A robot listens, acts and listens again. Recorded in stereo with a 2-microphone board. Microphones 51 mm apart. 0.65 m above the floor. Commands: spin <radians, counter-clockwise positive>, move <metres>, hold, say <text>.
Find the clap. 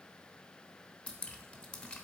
hold
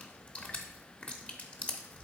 hold
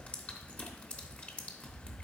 say I can't make out a clap, only dripping.